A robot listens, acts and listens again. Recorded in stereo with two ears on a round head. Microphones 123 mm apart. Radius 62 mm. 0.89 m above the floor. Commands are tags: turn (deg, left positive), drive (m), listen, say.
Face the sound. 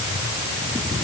<listen/>
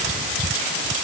<listen/>
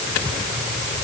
<say>I can't make out anything to turn to.</say>